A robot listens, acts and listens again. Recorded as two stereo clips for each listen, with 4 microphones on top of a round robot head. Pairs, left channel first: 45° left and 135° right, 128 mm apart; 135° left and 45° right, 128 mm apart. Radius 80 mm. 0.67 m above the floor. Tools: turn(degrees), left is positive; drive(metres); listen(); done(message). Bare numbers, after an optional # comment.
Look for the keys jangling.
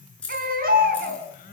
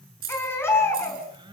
# The keys jangling: 40° right.
turn(-40)
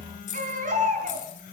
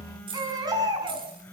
# The keys jangling is now 10° left.
turn(10)
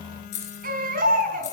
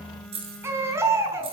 done("Facing the keys jangling.")